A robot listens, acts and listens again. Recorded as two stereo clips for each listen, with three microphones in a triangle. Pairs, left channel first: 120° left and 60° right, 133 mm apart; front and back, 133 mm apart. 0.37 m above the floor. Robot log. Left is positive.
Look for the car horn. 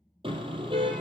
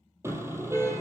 note: The car horn: 110° right.
cmd yaw -110
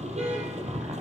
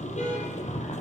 note: The car horn is now 30° right.
cmd yaw -30
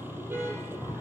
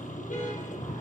note: The car horn is now 15° left.
cmd yaw +15
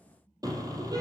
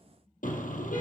end: Facing the car horn, over 4 m away.